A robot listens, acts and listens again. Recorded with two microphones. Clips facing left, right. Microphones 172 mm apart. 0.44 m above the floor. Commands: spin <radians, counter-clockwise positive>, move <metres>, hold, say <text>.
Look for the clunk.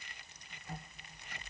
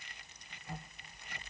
hold
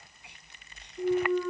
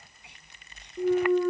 spin -1.05
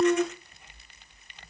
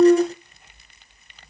spin -1.05
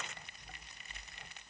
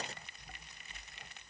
say Facing where the clunk came from. I can't hear it now.